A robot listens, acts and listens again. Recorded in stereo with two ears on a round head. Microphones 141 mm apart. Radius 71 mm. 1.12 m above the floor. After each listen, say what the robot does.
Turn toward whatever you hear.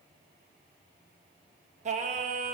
Turn 45° right.
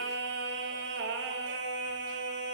Turn 85° right.
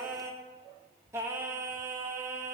Turn 15° right.
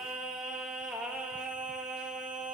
Found it: singing, straight ahead.